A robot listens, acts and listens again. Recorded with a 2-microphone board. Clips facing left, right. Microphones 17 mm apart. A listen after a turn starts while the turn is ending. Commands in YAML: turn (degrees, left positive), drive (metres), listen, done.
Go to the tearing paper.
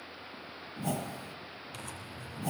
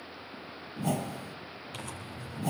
turn: -30
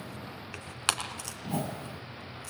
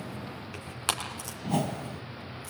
turn: 25
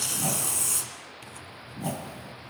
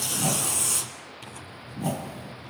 turn: -10
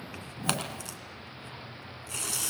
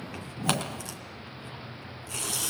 drive: 1.0
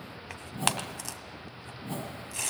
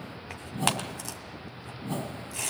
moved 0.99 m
turn: 10
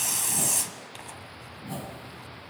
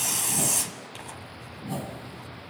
drive: 1.0
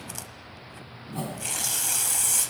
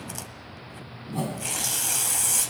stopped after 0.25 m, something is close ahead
done: "I am next to the tearing paper."